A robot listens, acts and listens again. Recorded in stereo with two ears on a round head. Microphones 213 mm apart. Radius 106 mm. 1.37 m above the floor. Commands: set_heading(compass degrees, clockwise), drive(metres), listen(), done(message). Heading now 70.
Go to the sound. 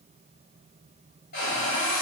set_heading(25)
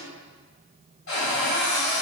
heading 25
set_heading(300)
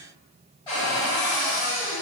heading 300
set_heading(280)
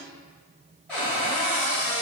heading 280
drive(1.0)
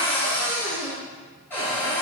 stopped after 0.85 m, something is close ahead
set_heading(270)
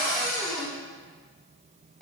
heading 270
done("Arrived at the cupboard door, straight ahead.")